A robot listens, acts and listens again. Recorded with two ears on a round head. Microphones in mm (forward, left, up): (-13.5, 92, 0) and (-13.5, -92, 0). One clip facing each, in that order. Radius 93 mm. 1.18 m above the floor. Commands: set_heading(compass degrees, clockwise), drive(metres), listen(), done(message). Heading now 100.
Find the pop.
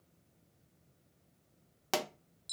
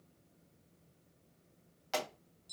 set_heading(40)
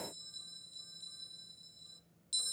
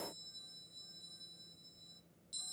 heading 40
listen()
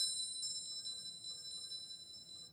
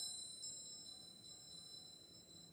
done("I heard a pop, but can't make it out now. It was about straight ahead or 60° left.")